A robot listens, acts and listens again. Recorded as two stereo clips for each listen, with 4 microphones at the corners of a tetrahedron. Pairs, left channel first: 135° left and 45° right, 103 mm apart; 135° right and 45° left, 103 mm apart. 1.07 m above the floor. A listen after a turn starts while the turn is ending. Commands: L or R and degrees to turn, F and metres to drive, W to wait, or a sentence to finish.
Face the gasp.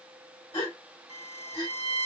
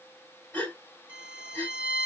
L155
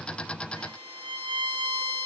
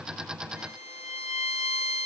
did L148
Facing where the gasp came from. I can't hear it now.